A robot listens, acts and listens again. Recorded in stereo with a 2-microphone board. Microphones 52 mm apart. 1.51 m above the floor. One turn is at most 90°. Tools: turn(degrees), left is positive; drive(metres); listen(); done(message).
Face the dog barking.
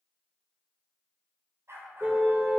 turn(degrees=-60)
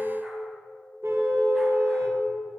listen()
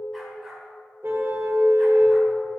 done("Found it: a dog barking, straight ahead, over 4 m away.")